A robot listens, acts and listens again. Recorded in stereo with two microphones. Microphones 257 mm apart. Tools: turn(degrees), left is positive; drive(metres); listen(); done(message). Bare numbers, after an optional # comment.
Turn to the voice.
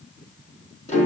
listen()
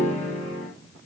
listen()
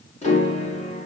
done("I can't make out anyone speaking, only a piano.")